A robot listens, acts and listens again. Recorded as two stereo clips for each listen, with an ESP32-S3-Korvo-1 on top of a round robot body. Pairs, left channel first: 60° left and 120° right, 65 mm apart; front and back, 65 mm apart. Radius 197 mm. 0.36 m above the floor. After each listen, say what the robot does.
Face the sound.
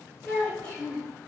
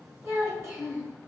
Turn 135° left.
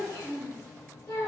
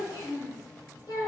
Turn 35° left.
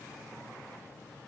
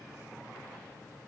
Keep listening.
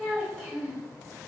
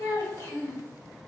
Turn 20° right.
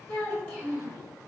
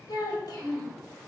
Facing the child speaking, 2 to 4 m away.